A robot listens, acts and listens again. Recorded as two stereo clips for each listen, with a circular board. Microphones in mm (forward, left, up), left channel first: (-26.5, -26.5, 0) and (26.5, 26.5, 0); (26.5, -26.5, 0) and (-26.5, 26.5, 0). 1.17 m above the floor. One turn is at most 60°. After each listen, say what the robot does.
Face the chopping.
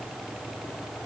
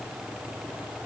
Keep listening.
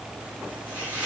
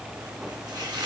Turn 60° left.
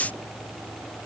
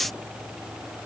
Turn 55° left.
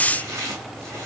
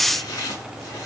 Found it: chopping, straight ahead.